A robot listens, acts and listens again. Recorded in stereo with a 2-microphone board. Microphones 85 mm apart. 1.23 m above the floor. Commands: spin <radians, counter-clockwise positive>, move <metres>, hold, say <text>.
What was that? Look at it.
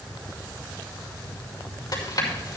spin 0.87
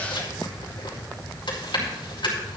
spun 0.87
spin 1.31
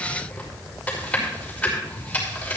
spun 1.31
spin 0.35
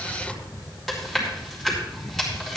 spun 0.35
say Found it: chewing, straight ahead, over 4 m away.